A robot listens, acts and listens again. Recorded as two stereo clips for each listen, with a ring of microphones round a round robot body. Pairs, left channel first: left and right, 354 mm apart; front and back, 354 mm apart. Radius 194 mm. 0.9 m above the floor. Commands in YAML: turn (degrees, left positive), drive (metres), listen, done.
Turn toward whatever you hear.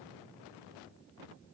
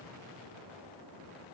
listen: true
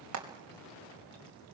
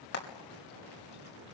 turn: -45
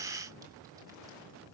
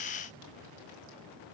listen: true
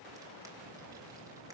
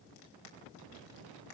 listen: true
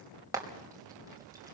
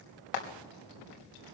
turn: -10
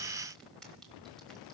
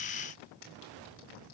listen: true
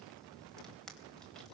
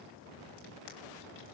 listen: true
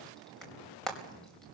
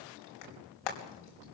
done: "Found it: frying, straight ahead, over 4 m away."